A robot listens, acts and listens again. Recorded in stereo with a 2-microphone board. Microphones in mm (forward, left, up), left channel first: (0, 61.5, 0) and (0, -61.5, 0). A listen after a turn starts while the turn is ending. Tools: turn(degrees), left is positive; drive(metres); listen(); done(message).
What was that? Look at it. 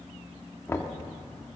turn(degrees=20)
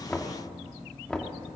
turn(degrees=10)
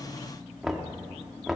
done("Facing the knocking.")